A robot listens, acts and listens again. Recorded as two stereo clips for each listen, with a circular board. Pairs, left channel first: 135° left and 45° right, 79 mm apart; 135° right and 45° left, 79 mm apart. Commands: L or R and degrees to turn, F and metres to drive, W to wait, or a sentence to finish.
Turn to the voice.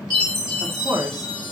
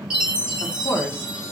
R80
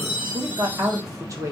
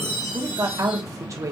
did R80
Found it: a woman speaking, straight ahead, 1 to 2 m away.